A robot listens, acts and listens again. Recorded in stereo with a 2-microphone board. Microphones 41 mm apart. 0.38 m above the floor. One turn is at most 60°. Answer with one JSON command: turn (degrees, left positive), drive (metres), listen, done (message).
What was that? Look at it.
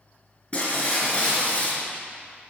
{"turn": 20}
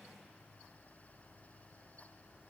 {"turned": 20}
{"listen": true}
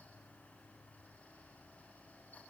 {"done": "I heard breaking glass, but can't make it out now. It was about straight ahead or 140° left."}